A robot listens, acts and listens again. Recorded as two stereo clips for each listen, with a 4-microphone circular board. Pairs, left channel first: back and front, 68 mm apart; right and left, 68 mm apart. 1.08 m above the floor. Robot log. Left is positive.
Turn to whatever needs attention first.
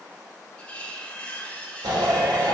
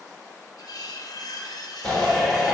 end: Facing the shout.